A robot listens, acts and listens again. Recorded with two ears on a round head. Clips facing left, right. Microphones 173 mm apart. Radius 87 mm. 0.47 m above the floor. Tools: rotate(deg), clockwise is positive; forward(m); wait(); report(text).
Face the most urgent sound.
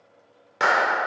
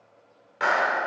wait()
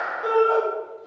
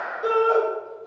rotate(25)
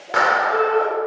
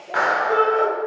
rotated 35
rotate(120)
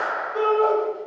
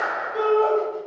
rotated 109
rotate(10)
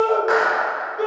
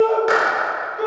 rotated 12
report("Facing the shout.")